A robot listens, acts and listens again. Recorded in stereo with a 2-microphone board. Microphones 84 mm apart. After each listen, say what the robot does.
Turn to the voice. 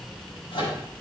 Keep listening.
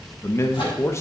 Turn 30° left.
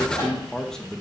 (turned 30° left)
Facing the man speaking, 1 to 2 m away.